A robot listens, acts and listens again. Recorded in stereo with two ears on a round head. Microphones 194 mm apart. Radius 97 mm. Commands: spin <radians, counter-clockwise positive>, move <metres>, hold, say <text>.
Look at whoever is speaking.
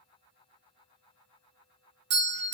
hold
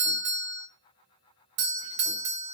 hold
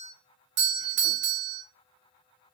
say I can't make out anyone speaking to turn to.